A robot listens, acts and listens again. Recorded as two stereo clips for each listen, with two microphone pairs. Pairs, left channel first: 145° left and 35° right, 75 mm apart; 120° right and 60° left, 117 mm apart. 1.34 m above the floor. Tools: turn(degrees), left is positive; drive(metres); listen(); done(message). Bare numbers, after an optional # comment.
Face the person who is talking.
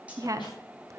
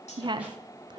# The woman speaking: 10° left.
turn(10)
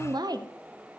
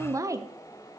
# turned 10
done("Found it: a woman speaking, straight ahead.")